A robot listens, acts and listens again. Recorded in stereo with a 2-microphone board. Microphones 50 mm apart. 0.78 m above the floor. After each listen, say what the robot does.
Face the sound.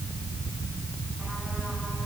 Keep listening.
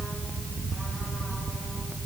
Keep listening.
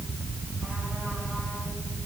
I can't make out anything to turn to.